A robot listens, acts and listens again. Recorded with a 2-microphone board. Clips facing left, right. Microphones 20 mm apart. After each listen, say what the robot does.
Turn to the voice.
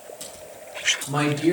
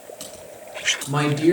Turn 30° right.
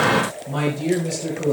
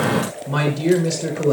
Turn 135° right.
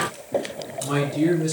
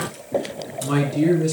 Facing the man speaking.